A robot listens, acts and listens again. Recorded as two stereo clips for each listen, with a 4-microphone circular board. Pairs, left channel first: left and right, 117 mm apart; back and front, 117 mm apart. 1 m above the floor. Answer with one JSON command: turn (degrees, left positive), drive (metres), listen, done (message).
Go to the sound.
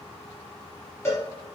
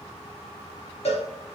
{"turn": 155}
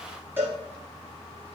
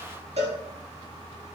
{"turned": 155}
{"turn": -20}
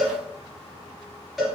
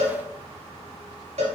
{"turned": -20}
{"drive": 1.0}
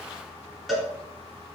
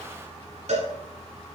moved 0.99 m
{"drive": 1.0}
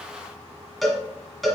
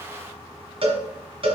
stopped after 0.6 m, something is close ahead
{"done": "Arrived at the cowbell, straight ahead."}